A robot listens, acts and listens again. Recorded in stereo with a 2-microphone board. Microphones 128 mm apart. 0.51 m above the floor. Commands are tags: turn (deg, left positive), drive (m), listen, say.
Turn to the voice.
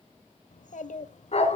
<turn deg="90"/>
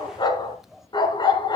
<say>Found it: a child speaking, straight ahead, 1 to 2 m away.</say>